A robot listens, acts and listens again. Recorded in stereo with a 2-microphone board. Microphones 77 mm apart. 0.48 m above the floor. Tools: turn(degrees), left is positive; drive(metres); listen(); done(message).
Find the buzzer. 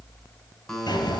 turn(degrees=30)
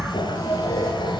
listen()
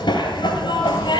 listen()
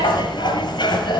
done("I heard a buzzer, but can't make it out now. It was about 25° right or 145° left.")